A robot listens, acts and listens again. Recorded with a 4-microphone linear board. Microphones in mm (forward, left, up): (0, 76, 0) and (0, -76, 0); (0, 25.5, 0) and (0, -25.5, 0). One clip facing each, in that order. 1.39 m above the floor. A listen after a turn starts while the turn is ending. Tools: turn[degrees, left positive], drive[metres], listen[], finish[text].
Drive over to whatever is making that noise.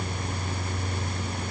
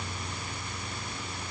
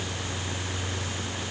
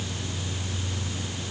Action: listen[]
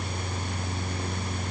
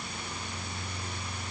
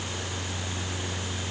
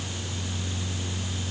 Action: listen[]
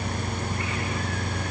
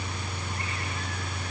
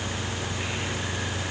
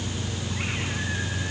Action: finish[I can't make out anything.]